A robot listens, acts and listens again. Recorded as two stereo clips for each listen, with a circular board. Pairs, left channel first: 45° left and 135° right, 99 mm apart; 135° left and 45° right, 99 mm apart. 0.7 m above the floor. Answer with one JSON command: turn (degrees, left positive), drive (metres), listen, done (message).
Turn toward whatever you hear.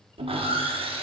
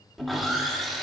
{"turn": -135}
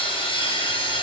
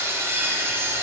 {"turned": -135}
{"turn": 20}
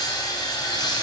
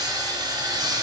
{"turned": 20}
{"done": "Facing the sawing."}